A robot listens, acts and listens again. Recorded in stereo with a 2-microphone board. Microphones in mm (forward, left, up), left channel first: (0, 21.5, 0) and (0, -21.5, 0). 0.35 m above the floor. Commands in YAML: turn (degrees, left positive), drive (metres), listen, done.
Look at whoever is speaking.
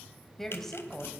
turn: 30
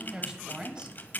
turn: -20
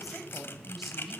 done: "Facing the woman speaking."